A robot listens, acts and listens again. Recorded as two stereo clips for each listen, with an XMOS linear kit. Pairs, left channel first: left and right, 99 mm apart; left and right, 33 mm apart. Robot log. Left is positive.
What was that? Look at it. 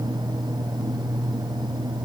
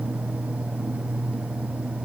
cmd idle
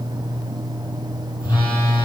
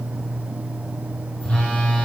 note: The phone buzzing: about 45° left or 135° left.
cmd yaw +45
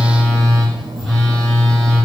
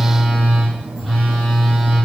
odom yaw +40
end: Found it: a phone buzzing, straight ahead, over 4 m away.